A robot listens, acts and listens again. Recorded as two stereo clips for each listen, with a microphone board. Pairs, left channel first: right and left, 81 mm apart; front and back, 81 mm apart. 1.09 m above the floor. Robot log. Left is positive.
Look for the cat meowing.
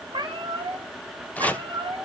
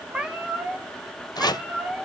note: The cat meowing: 105° left.
cmd yaw +105
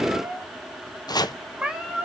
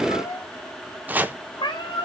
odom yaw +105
note: The cat meowing is now 10° left.
cmd yaw +10
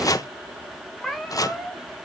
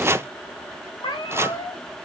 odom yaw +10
end: Found it: a cat meowing, straight ahead.